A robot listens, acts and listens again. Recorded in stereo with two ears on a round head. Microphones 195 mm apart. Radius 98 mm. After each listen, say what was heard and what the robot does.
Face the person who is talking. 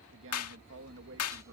The man speaking: about 60° right or 120° right. Turn 60° right.
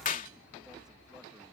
Keep listening.
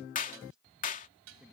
Keep listening.
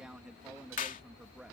Found it: a man speaking, straight ahead.